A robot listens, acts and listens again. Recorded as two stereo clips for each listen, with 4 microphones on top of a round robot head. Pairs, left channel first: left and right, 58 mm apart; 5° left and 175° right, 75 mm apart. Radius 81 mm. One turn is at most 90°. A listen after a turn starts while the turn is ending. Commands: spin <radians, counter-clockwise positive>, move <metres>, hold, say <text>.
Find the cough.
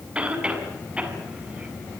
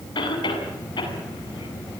spin -0.35
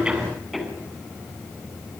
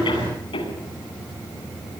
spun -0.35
say Facing the cough, over 4 m away.